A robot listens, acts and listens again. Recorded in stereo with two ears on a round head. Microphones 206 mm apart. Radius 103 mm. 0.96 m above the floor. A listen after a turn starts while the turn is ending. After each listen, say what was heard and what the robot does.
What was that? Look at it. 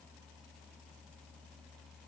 Keep listening.
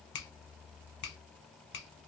The finger snap: about 55° left or 125° left. Turn 55° left.
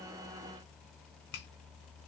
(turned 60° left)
So it is at 60° left. Turn 60° left.
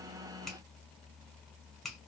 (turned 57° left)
Found it: a finger snap, straight ahead, 1 to 2 m away.